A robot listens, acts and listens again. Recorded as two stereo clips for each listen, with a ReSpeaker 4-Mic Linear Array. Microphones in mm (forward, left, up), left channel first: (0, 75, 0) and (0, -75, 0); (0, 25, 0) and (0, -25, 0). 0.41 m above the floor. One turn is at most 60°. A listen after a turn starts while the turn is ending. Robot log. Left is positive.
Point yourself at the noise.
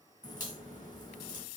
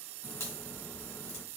note: The crack: about 60° left or 120° left.
cmd yaw +60
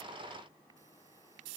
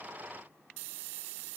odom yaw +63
cmd idle
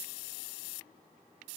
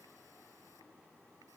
end: I heard a crack, but can't make it out now. It was about straight ahead or 55° left.